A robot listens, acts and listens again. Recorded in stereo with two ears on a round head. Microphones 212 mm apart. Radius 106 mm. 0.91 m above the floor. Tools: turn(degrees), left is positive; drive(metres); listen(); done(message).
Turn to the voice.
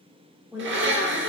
turn(degrees=-30)
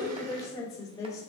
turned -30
turn(degrees=15)
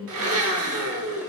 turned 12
done("Found it: a woman speaking, straight ahead, 2 to 4 m away.")